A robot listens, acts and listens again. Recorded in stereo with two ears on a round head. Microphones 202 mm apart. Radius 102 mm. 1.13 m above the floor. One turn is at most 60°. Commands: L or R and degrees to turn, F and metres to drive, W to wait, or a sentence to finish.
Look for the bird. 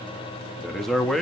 W
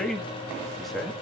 W
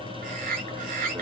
R40
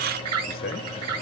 R60
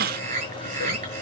R35
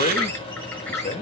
L10
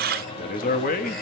W
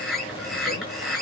Facing the bird, over 4 m away.